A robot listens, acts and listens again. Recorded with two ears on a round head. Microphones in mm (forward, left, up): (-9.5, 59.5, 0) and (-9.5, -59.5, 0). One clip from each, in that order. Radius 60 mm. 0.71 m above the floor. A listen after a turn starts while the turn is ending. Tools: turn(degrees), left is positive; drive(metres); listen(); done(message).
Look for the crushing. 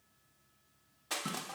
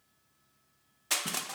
turn(degrees=-40)
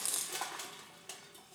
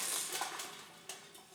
done("Found it: crushing, straight ahead.")